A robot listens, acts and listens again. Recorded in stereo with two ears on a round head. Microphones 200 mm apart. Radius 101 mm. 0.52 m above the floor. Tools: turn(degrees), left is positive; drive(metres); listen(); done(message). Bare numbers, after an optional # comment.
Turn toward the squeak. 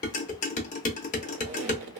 # The squeak: about 55° right or 125° right.
turn(-55)
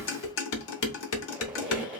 done("Found it: a squeak, straight ahead, 1 to 2 m away.")